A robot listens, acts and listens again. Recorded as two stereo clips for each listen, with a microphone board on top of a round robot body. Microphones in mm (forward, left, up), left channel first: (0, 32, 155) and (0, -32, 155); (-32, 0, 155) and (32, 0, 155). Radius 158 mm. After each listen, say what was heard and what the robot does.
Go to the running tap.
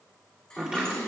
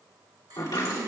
The running tap: 15° left. Turn 15° left.
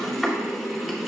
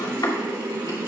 Drive 1.0 m forward.
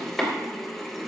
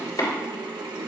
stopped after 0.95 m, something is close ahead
Arrived at the running tap, straight ahead.